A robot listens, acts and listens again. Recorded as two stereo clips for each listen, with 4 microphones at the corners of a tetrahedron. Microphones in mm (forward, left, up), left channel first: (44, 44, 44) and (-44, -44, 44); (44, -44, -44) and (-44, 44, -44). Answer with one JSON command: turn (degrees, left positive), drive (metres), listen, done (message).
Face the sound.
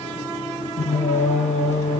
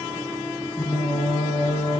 {"turn": 15}
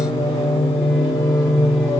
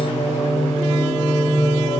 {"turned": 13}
{"turn": -10}
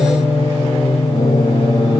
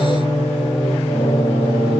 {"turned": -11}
{"done": "Found it: singing, straight ahead, 2 to 4 m away."}